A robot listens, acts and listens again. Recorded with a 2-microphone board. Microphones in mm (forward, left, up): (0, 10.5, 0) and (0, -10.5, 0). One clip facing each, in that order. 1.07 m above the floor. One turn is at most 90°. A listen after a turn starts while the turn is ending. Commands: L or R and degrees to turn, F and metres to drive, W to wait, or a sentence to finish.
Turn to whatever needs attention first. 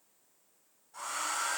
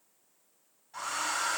W
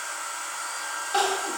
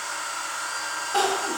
L30
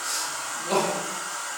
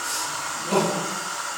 L90
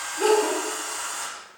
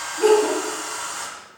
L30
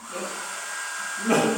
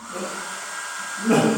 L55
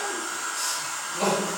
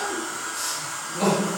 L10
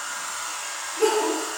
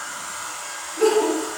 Found it: crying, straight ahead.